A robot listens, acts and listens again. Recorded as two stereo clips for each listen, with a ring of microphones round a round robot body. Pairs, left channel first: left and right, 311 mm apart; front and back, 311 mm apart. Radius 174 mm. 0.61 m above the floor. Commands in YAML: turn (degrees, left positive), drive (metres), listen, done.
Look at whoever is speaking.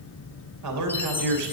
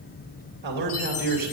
turn: -115
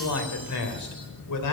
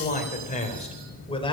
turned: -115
turn: 75
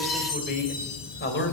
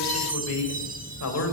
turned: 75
turn: 40
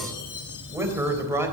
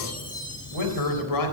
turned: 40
turn: -10
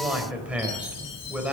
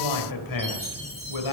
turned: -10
done: "Found it: a man speaking, straight ahead, 2 to 4 m away."